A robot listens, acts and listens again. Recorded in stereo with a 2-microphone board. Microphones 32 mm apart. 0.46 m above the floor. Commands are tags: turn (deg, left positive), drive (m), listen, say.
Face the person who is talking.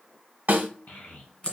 <turn deg="65"/>
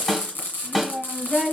<say>Facing the child speaking, 1 to 2 m away.</say>